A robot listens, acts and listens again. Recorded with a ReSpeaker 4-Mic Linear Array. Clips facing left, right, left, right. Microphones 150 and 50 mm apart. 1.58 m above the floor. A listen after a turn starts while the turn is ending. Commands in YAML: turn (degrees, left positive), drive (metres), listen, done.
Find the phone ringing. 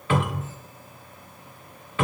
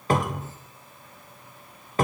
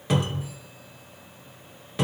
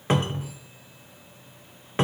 listen: true
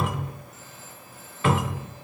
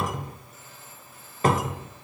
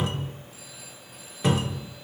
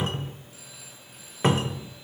listen: true
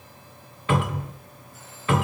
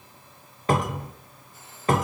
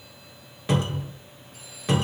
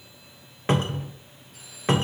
done: "I can't make out a phone ringing, only a cupboard door."